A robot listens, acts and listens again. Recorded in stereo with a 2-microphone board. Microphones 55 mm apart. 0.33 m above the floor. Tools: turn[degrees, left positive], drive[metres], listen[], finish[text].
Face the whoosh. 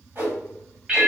Thought: The whoosh: about 45° right or 135° right.
Action: turn[-45]
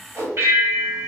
Thought: So it is at 80° right.
Action: turn[-80]
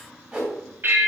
Thought: The whoosh is now 20° right.
Action: turn[-20]
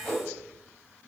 Action: finish[Found it: a whoosh, straight ahead, 1 to 2 m away.]